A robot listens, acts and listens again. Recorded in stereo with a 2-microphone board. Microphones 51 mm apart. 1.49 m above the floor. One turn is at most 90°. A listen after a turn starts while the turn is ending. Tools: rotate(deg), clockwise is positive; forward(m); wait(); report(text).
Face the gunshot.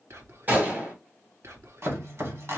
rotate(35)
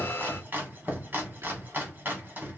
wait()
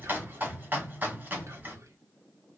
report("I heard a gunshot, but can't make it out now. It was about straight ahead or 110° right.")